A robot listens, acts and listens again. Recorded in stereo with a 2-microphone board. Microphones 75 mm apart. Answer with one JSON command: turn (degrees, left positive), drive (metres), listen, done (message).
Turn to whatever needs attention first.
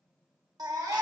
{"turn": -60}
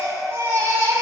{"turn": -45}
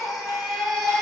{"done": "Facing the baby crying, under 1 m away."}